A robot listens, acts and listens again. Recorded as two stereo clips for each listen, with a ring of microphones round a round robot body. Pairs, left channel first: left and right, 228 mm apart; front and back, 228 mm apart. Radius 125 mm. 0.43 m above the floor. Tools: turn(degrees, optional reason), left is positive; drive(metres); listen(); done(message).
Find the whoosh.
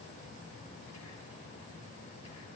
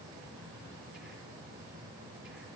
listen()
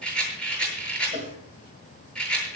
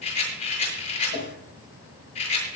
turn(degrees=-35, reason="The whoosh: 35° right.")
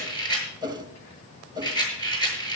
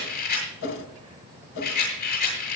turn(degrees=-20, reason="The whoosh is now 20° right.")
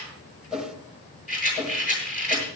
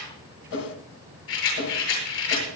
done("Facing the whoosh.")